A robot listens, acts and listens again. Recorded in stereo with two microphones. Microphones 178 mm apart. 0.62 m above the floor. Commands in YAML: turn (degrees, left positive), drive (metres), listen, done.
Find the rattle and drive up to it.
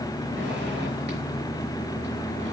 listen: true
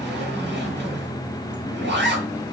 listen: true
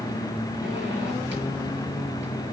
done: "I can't make out a rattle to turn to."